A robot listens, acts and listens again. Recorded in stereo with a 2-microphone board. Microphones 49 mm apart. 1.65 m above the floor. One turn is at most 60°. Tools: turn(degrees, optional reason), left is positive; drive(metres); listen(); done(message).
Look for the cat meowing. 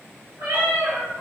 turn(degrees=-55, reason="The cat meowing: about 55° right or 125° right.")
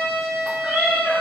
turn(degrees=-60, reason="So it is at 60° right.")
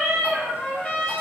done("Facing the cat meowing.")